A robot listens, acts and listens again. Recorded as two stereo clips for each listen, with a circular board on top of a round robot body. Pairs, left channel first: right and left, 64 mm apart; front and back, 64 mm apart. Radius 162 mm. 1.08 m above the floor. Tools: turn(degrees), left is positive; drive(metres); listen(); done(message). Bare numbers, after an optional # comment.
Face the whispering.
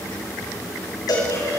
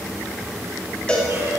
listen()
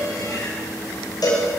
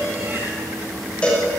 listen()
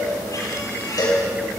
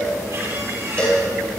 done("I can't make out whispering, only a cowbell.")